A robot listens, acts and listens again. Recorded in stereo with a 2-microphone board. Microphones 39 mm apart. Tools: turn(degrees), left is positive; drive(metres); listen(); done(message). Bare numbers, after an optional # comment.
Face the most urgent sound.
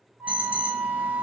# The alarm: about 30° right or 150° right.
turn(-30)
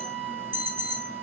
# So it is at 120° right.
turn(-120)
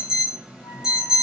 # The alarm is now 15° right.
turn(-15)
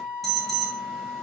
done("Facing the alarm.")